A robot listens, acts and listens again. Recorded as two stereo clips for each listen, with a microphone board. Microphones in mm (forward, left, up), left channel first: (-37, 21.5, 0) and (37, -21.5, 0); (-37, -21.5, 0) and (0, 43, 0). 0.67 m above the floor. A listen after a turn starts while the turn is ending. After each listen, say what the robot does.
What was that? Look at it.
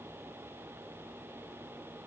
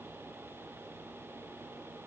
Keep listening.
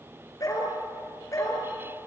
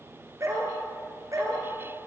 Turn 100° left.
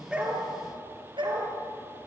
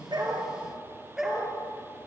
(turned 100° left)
Turn 25° right.
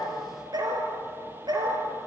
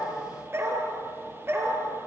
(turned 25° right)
Found it: a dog barking, straight ahead.